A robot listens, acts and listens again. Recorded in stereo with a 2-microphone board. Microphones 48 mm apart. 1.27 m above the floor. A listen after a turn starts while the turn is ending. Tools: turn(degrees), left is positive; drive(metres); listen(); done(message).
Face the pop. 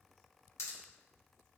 turn(degrees=70)
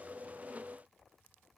listen()
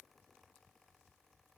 done("I heard a pop, but can't make it out now. It was about straight ahead or 40° left.")